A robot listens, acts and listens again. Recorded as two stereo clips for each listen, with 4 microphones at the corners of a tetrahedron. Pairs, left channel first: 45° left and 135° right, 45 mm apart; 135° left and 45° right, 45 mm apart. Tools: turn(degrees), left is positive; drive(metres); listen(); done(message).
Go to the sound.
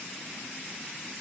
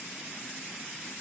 listen()
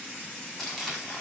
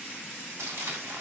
turn(degrees=-35)
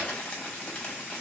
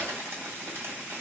turn(degrees=-15)
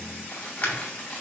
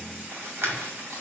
drive(metres=1.0)
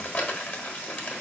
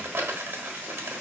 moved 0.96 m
turn(degrees=-10)
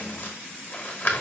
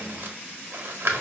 drive(metres=1.0)
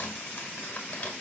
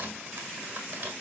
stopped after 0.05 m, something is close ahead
done("I am next to the crumpling.")